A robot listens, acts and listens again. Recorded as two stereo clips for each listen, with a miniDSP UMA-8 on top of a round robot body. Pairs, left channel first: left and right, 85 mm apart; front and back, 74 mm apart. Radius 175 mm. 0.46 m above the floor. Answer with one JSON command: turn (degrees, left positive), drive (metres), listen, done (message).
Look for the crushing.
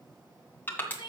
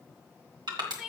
{"turn": 155}
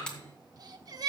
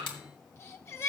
{"turn": 10}
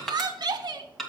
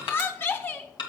{"done": "Facing the crushing, 2 to 4 m away."}